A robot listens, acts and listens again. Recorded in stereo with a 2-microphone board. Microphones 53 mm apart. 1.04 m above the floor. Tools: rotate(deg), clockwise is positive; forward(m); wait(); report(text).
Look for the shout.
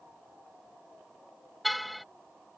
wait()
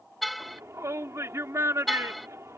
rotate(65)
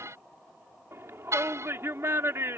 rotate(50)
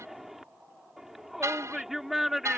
report("Facing the shout.")